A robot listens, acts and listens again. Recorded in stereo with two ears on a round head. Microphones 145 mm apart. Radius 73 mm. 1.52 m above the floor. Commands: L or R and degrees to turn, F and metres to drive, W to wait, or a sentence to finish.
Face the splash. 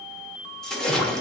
L30
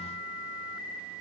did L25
W
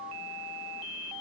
I heard a splash, but can't make it out now. It was about 20° right or 150° left.